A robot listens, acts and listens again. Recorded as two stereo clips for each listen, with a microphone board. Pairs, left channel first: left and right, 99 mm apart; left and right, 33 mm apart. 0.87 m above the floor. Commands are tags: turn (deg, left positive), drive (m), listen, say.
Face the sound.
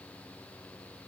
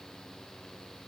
<listen/>
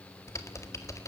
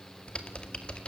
<turn deg="30"/>
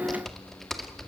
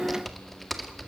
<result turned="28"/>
<say>Facing the typing on a keyboard.</say>